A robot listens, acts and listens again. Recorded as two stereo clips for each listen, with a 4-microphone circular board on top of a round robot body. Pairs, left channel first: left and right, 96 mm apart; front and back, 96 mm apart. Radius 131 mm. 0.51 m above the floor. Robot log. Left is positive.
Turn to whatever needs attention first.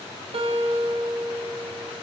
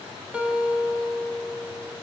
cmd idle
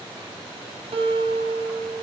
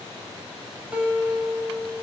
cmd idle
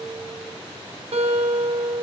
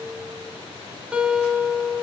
end: I can't make out anything urgent, only a guitar.